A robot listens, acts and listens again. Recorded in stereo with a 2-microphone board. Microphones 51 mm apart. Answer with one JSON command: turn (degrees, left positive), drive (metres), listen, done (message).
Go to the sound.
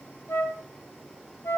{"turn": 60}
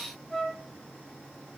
{"turn": 10}
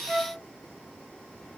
{"drive": 1.0}
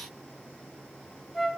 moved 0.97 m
{"drive": 1.0}
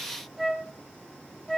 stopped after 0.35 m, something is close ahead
{"done": "Arrived at the flute, straight ahead."}